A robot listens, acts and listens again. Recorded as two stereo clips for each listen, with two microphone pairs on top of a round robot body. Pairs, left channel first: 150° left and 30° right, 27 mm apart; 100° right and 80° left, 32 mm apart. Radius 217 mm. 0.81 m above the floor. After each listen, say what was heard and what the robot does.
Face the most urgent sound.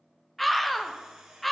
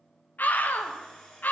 The scream: 125° right. Turn 125° right.
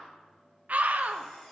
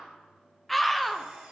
The scream is now 10° right. Turn 10° right.
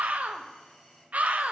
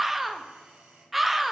Facing the scream, 1 to 2 m away.